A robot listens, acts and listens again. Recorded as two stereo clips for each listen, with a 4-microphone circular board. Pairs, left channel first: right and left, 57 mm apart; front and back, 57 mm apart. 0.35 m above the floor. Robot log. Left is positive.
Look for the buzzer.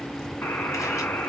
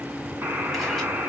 note: The buzzer: 135° right.
cmd yaw -135
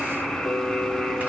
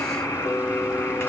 end: Found it: a buzzer, straight ahead.